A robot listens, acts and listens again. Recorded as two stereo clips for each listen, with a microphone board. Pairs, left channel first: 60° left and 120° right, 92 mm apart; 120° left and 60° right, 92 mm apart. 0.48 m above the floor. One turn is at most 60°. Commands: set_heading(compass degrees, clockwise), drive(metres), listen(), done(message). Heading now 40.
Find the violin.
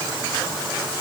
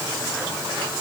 listen()
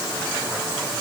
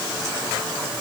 listen()
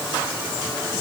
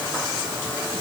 done("I can't make out a violin.")